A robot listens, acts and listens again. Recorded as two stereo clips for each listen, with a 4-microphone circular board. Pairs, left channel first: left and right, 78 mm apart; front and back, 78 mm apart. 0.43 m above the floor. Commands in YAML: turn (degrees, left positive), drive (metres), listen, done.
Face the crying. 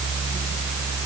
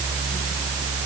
listen: true
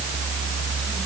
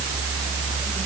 listen: true
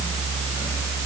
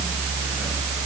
done: "I can't make out crying."